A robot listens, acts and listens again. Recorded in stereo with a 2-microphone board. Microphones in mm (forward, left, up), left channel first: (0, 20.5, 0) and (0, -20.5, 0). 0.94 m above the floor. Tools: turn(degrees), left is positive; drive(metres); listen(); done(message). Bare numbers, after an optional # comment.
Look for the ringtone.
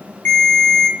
# The ringtone: about 60° left or 120° left.
turn(60)
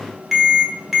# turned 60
done("Found it: a ringtone, straight ahead.")